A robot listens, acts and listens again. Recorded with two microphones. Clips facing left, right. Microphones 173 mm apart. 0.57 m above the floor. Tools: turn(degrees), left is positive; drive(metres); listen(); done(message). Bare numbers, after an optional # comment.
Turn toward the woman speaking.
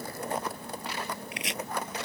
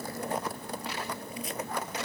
listen()
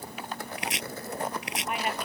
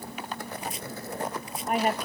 # The woman speaking: about 40° right or 140° right.
turn(-40)
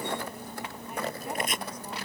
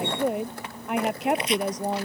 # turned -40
# So it is at 100° right.
turn(-100)
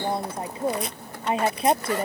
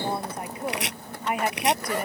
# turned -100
# The woman speaking is now 25° left.
turn(25)
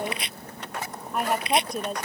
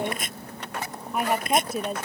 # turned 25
done("Facing the woman speaking.")